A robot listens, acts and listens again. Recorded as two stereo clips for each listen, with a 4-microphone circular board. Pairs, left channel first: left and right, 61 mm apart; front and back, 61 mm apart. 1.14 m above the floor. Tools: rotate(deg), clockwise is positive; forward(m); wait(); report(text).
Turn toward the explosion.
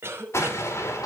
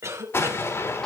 rotate(-45)
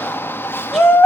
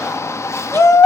report("I heard an explosion from this way, but can't make it out now.")